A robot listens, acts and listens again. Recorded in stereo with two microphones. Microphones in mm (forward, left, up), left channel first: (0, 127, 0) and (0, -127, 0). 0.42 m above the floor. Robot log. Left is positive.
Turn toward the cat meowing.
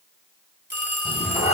note: The cat meowing: about 25° left or 155° left.
cmd yaw +25
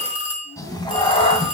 note: The cat meowing: about 25° left or 155° left.
cmd yaw +25
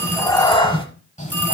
note: The cat meowing: about 30° left or 150° left.
cmd yaw +30
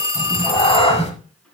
note: The cat meowing: about 25° left or 155° left.
cmd yaw +25
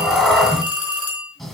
end: Facing the cat meowing.